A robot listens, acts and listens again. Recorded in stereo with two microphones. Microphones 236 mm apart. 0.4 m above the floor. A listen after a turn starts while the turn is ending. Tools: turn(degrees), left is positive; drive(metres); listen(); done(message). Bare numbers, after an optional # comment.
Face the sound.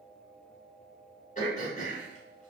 # The throat clearing: about 35° left or 145° left.
turn(35)
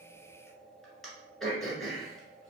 done("Found it: throat clearing, straight ahead, 1 to 2 m away.")